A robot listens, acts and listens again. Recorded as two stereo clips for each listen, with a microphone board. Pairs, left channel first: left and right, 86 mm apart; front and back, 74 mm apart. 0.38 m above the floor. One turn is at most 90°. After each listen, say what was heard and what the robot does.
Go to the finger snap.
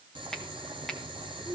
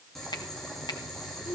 Drive 1.0 m forward.
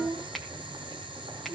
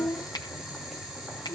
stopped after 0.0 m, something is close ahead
Blocked. The finger snap is further on, straight ahead.